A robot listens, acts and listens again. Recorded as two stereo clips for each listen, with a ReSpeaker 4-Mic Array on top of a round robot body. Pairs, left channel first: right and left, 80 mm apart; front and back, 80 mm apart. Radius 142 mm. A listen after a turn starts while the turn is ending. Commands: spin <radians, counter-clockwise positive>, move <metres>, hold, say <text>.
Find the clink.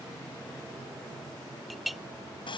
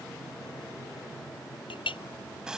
say Facing the clink.